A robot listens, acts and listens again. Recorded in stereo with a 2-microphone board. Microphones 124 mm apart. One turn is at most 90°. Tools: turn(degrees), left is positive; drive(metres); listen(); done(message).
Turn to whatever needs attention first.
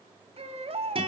turn(degrees=-55)
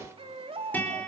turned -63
turn(degrees=-55)
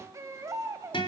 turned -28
turn(degrees=-25)
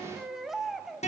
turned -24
done("Facing the baby crying, 2 to 4 m away.")